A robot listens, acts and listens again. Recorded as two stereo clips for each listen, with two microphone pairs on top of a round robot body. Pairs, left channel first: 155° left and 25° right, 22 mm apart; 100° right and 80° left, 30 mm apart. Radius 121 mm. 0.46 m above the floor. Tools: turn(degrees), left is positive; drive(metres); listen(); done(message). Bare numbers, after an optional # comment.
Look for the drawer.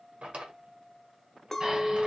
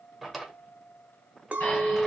# The drawer: 10° right.
turn(-10)
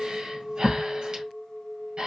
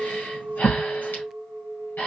listen()
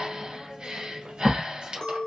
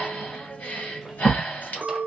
listen()
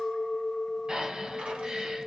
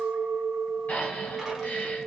done("I heard a drawer from this way, but can't make it out now.")